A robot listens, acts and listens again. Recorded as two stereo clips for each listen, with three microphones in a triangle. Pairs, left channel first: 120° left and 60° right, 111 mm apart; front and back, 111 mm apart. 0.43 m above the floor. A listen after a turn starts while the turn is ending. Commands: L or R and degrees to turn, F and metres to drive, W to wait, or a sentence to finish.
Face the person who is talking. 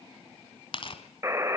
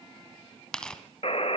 W
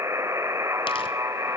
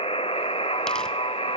W
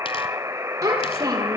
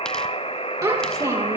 R120
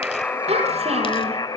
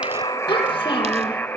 R50
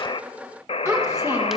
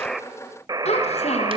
Found it: a child speaking, straight ahead.